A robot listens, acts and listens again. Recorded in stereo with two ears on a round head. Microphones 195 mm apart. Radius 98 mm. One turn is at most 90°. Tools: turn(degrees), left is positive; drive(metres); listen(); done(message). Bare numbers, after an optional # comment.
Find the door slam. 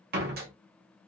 # The door slam: about 45° right or 135° right.
turn(-45)
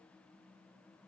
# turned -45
listen()
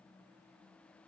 done("I heard a door slam, but can't make it out now. It was about straight ahead or 90° right.")